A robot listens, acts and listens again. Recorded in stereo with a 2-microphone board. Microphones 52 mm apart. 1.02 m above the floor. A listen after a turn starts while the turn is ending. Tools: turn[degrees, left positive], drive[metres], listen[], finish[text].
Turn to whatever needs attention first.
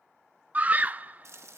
Thought: The scream: about 25° right or 155° right.
Action: turn[-25]
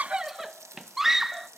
Action: finish[Facing the scream.]